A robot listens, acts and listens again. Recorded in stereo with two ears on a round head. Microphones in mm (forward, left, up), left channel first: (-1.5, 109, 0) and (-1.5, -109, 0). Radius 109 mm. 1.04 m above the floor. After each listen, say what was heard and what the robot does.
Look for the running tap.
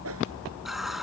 Turn 30° left.
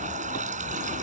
So it is at 30° right. Turn 30° right.
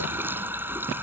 The running tap is now 10° right. Turn 10° right.
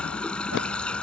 Found it: a running tap, straight ahead.